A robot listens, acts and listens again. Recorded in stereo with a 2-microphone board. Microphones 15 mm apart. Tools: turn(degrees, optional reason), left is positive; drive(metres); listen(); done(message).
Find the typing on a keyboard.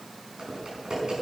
turn(degrees=-70, reason="The typing on a keyboard: about 70° right or 110° right.")
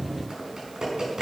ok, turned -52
turn(degrees=-50, reason="So it is at 50° right.")
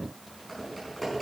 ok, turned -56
turn(degrees=10, reason="The typing on a keyboard is now 10° left.")
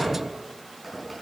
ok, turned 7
done("Facing the typing on a keyboard, over 4 m away.")